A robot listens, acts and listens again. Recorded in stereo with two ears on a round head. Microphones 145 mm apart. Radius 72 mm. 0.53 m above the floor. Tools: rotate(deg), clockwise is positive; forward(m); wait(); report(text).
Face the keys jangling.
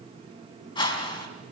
wait()
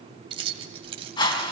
rotate(35)
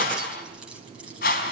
report("Facing the keys jangling.")